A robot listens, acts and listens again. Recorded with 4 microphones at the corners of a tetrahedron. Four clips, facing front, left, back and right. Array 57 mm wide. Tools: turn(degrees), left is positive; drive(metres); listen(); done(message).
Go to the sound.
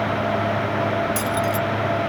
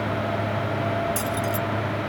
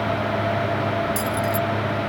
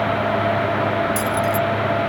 turn(degrees=15)
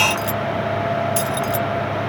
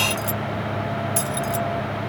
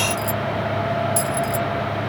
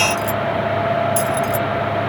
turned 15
drive(metres=1.0)
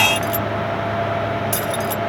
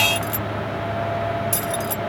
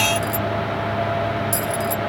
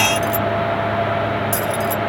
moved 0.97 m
drive(metres=1.0)
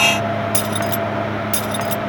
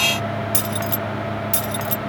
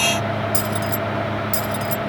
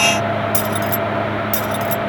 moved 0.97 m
drive(metres=1.0)
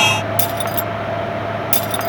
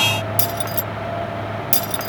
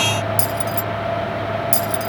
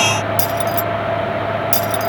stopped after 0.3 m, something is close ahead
done("Arrived at the keys jangling, straight ahead.")